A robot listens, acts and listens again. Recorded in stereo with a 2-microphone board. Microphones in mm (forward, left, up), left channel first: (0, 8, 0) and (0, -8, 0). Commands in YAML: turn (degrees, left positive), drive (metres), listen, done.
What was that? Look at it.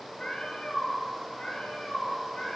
turn: 75
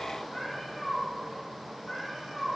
turn: 35
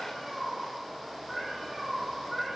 done: "Facing the cat meowing."